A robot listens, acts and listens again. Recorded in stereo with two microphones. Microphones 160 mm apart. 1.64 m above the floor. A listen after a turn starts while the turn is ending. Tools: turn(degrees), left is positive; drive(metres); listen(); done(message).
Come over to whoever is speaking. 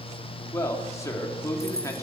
turn(degrees=20)
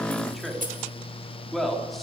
drive(metres=1.0)
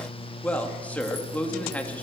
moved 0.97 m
turn(degrees=10)
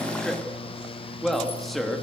drive(metres=1.0)
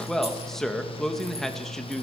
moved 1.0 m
drive(metres=1.0)
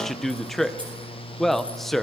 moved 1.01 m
drive(metres=1.0)
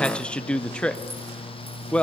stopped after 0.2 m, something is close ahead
done("I am next to the man speaking.")